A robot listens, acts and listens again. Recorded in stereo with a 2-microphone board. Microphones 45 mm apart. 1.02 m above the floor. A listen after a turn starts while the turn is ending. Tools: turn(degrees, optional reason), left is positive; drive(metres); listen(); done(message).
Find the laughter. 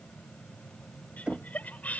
turn(degrees=35, reason="The laughter: about 35° left or 145° left.")
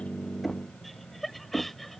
done("Facing the laughter.")